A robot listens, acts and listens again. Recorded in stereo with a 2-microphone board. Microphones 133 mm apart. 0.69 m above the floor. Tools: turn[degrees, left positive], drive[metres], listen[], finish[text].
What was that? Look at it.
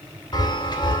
Thought: The chime: about 35° left or 145° left.
Action: turn[35]
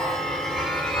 Action: finish[Found it: a chime, straight ahead, 2 to 4 m away.]